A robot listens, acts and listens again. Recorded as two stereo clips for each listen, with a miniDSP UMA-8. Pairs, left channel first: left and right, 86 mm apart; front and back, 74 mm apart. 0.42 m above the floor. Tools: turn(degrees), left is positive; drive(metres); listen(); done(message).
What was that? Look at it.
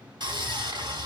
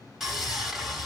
turn(degrees=-95)
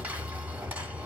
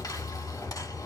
turn(degrees=-25)
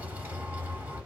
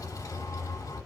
turn(degrees=-25)
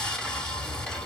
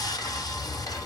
turn(degrees=10)
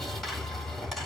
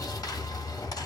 done("Facing the sawing, 2 to 4 m away.")